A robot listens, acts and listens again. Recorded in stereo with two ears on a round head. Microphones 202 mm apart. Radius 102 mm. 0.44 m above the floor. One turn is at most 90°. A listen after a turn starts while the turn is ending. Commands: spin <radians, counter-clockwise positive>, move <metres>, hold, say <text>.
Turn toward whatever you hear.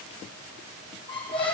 spin 0.44
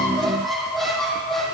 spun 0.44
say Found it: a squeak, straight ahead, over 4 m away.